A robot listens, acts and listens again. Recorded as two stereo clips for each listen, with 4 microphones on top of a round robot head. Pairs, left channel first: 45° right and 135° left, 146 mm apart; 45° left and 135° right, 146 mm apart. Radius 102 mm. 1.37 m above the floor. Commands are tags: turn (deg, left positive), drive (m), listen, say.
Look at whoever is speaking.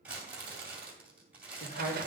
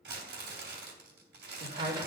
<turn deg="-80"/>
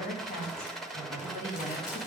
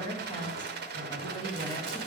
<turn deg="-15"/>
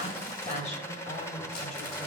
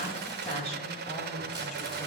<say>Facing the woman speaking.</say>